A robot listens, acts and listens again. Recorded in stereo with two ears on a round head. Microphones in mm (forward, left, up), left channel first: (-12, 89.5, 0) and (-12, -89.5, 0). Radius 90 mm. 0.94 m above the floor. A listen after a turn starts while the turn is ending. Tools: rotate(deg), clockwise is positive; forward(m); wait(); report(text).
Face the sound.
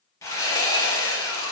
rotate(-15)
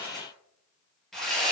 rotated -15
report("Found it: sawing, straight ahead, over 4 m away.")